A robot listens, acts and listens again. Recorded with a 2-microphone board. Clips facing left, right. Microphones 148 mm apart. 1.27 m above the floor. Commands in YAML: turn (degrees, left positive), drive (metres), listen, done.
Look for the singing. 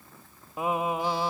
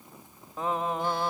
turn: 30
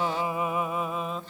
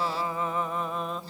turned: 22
turn: 30
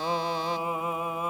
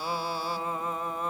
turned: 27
turn: 30
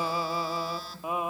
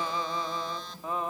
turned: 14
turn: 30
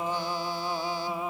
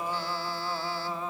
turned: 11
turn: 30
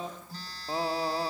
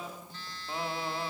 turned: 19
turn: 145
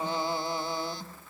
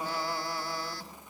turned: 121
turn: 25
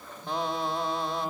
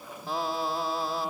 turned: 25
done: "Facing the singing, 2 to 4 m away."